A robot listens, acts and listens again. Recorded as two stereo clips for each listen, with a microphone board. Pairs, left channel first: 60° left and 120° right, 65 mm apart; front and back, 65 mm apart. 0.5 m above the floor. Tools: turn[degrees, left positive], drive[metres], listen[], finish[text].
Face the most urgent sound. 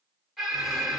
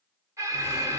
Thought: The alarm: 155° left.
Action: turn[155]
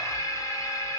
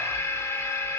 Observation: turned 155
Thought: The alarm is now 40° left.
Action: turn[40]
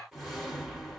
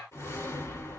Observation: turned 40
Action: listen[]
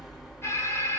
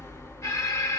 Thought: The alarm is now 20° left.
Action: turn[20]
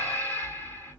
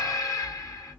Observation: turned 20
Action: finish[Found it: an alarm, straight ahead, 1 to 2 m away.]